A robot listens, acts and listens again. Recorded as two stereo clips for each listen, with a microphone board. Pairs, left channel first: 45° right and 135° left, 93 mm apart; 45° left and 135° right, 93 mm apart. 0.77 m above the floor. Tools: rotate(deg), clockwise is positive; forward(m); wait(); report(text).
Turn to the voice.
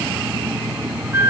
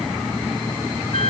wait()
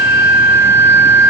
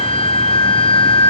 wait()
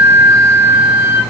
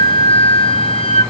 report("I can't make out anyone speaking to turn to.")